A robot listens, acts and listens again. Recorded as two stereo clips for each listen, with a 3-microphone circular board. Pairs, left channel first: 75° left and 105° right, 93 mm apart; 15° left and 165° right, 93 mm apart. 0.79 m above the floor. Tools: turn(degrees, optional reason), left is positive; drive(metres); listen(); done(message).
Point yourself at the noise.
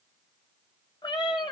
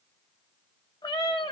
turn(degrees=45, reason="The cat meowing: 45° left.")
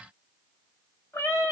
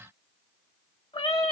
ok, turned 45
turn(degrees=10, reason="The cat meowing is now 10° left.")
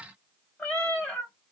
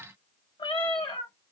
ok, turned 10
done("Found it: a cat meowing, straight ahead.")